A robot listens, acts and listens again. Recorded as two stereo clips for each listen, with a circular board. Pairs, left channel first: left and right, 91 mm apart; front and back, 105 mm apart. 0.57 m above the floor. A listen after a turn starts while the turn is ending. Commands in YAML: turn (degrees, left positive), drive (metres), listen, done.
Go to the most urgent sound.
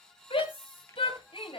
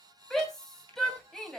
turn: 85
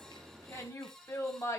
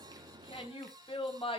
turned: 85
turn: 30
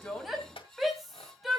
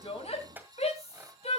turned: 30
drive: 1.0
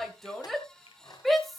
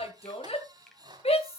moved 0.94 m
drive: 1.0
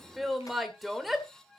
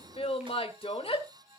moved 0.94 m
drive: 1.0
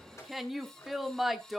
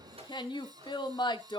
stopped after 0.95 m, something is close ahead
done: "Arrived at the shout, straight ahead."